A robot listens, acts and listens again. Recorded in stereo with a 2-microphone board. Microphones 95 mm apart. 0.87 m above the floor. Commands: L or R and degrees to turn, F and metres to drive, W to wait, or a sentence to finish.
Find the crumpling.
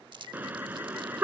R55
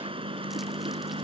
W
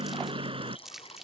Facing the crumpling.